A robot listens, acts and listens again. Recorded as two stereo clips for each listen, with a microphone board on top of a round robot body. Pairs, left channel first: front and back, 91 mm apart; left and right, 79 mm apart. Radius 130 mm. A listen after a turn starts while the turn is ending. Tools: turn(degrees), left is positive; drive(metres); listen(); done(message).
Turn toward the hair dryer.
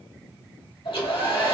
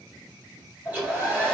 turn(degrees=-25)
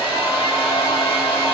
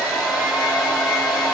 turn(degrees=-15)
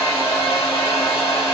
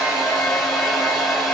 done("Facing the hair dryer, 1 to 2 m away.")